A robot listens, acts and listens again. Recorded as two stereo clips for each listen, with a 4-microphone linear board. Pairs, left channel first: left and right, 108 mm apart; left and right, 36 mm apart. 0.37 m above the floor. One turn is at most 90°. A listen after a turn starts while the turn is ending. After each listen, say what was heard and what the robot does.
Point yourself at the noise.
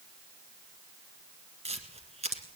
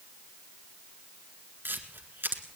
Turn 90° right.
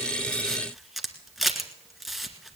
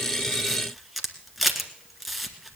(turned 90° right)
Found it: a camera shutter, straight ahead.